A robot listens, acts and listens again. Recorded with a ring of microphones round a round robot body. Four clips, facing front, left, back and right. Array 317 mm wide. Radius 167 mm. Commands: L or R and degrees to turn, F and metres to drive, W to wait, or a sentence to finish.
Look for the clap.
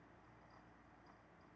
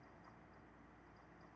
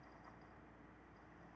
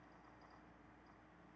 W
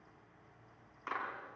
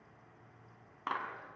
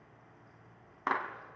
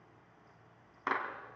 R170
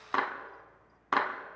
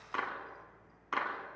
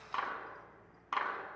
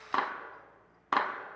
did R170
R45
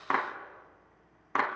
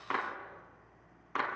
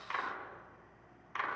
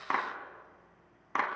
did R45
R20
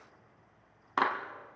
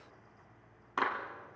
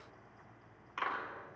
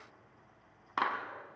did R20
Facing the clap.